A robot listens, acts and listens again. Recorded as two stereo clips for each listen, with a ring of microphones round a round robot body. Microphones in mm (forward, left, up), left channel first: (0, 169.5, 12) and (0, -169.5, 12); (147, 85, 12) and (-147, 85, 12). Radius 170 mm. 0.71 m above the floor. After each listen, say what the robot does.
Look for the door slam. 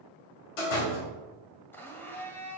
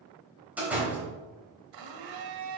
Turn 95° left.
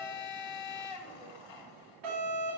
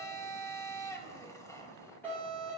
I heard a door slam from this way, but can't make it out now.